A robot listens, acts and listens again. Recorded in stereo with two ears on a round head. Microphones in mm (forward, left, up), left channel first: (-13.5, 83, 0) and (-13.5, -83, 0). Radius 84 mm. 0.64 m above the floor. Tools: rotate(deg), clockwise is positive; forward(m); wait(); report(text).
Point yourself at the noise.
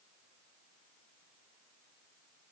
wait()
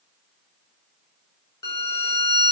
rotate(-20)
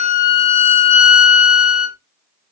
rotate(-135)
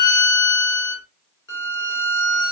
rotate(-15)
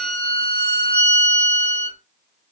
report("Facing the violin, 1 to 2 m away.")